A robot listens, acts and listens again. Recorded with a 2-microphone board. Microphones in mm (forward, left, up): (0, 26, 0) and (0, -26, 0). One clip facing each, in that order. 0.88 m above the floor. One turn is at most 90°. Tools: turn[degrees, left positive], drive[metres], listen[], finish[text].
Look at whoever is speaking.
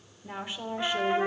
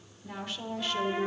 Thought: The woman speaking: about 20° left or 160° left.
Action: turn[20]
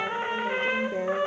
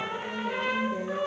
Thought: So it is at 135° left.
Action: turn[90]
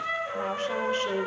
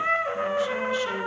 Thought: Nothing new. It was at 45° left.
Action: turn[45]
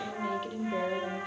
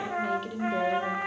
Action: finish[Facing the woman speaking.]